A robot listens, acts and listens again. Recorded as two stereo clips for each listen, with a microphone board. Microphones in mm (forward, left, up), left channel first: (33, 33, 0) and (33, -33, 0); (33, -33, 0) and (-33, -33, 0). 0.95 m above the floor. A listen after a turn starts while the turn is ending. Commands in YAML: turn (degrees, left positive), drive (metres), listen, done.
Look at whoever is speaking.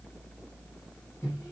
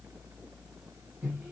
listen: true
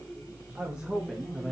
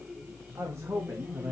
turn: 175
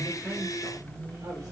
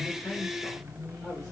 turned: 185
turn: -10
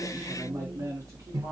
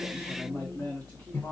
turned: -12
turn: -55
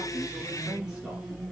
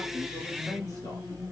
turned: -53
done: "Found it: a man speaking, straight ahead, 2 to 4 m away."